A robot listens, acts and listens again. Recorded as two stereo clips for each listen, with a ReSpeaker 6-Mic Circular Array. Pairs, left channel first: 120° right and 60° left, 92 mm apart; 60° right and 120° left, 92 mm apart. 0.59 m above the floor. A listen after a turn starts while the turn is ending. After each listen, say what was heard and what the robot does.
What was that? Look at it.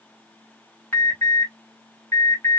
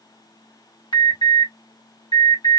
The alarm: 60° right. Turn 60° right.
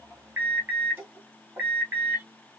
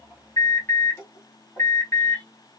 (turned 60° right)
Found it: an alarm, straight ahead.